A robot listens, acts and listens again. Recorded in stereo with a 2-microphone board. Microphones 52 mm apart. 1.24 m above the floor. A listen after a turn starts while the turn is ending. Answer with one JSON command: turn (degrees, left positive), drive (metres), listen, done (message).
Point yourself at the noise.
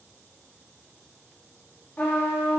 {"turn": 40}
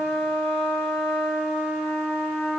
{"done": "Found it: a trumpet, straight ahead."}